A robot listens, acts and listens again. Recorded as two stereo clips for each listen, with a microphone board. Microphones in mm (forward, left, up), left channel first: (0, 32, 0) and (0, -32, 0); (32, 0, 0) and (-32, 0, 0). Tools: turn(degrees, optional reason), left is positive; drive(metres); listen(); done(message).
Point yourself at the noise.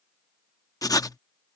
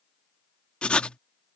turn(degrees=75, reason="The writing: 75° left.")
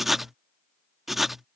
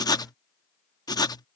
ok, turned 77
done("Facing the writing.")